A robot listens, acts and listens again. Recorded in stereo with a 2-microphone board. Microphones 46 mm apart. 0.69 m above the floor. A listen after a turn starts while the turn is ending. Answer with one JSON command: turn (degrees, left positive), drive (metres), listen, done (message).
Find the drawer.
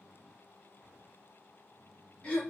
{"listen": true}
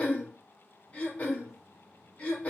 {"listen": true}
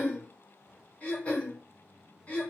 {"done": "I can't make out a drawer to turn to."}